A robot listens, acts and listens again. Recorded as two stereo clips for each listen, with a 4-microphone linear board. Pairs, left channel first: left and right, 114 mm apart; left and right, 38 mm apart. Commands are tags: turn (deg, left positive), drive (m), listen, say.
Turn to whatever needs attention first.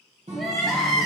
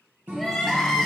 <turn deg="30"/>
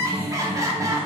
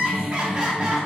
<turn deg="-30"/>
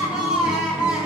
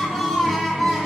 <say>Found it: crying, straight ahead, under 1 m away.</say>